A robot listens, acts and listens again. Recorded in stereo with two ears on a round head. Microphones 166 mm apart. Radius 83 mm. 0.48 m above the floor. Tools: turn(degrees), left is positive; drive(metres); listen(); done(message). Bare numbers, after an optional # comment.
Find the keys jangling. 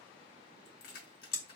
# The keys jangling: about 60° left or 120° left.
turn(60)
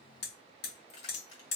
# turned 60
# So it is at 45° left.
turn(45)
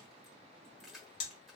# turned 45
done("Found it: keys jangling, straight ahead, 1 to 2 m away.")